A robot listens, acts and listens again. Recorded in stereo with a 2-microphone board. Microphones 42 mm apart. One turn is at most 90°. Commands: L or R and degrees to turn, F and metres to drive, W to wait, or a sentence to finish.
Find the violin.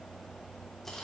W
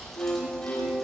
L45
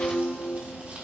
L85
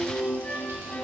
L35
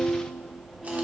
R10
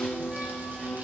Found it: a violin, straight ahead.